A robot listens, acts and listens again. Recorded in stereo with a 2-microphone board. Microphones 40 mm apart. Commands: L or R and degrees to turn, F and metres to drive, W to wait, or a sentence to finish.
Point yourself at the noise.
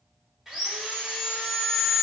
R30
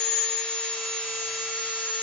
L20
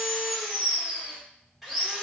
Facing the sawing, 1 to 2 m away.